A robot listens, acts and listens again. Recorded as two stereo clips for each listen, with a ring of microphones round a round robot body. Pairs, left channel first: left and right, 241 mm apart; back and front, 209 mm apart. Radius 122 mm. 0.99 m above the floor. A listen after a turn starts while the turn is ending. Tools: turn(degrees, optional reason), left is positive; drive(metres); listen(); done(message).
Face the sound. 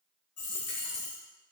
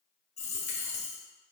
turn(degrees=120, reason="The dropped coin: 120° left.")
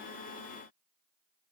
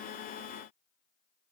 done("Facing where the dropped coin came from. I can't hear it now.")